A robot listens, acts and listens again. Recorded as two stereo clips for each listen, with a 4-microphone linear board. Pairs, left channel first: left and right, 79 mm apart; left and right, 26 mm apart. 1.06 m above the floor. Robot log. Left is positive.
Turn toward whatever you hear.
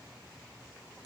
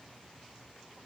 cmd idle
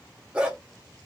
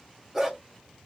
cmd yaw -30
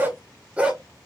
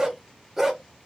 cmd yaw -30
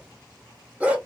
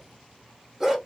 cmd yaw -30
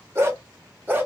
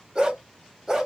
note: The dog barking: about 25° right or 155° right.
cmd yaw -25
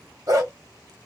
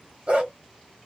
note: So it is at 140° right.
cmd yaw -140
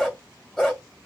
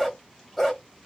end: Found it: a dog barking, straight ahead, 1 to 2 m away.